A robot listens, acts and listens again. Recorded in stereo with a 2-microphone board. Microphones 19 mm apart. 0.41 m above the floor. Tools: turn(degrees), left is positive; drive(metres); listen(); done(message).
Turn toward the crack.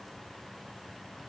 listen()
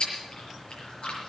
listen()
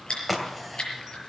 turn(degrees=30)
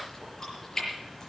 listen()
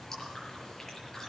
done("I heard a crack, but can't make it out now. It was about 25° right or 145° left.")